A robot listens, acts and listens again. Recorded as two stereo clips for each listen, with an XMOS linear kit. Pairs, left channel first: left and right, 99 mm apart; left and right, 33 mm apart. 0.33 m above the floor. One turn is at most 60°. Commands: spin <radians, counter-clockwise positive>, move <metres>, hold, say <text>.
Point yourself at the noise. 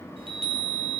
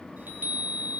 spin -1.05
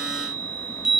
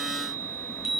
say Found it: a chime, straight ahead, 1 to 2 m away.